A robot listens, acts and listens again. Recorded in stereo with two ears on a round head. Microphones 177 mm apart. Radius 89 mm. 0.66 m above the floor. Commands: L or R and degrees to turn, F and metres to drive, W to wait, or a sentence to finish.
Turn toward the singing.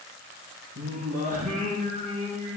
R45
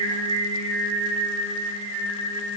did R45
R95
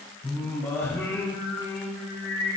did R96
L15
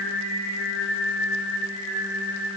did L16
Facing the singing, over 4 m away.